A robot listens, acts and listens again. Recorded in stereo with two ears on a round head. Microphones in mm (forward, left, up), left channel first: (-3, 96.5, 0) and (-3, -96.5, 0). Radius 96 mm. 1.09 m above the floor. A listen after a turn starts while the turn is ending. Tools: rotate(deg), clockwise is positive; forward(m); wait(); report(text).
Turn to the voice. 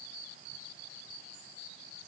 wait()
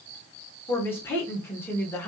rotate(-30)
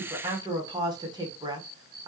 rotate(20)
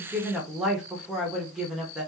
report("Facing the woman speaking, 1 to 2 m away.")